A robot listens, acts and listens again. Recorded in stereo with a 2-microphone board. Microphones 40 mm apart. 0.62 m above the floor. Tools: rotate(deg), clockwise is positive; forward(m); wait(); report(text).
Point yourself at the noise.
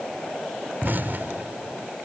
rotate(55)
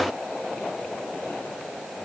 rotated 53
wait()
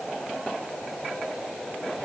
report("I heard an explosion, but can't make it out now. It was about straight ahead or 75° right.")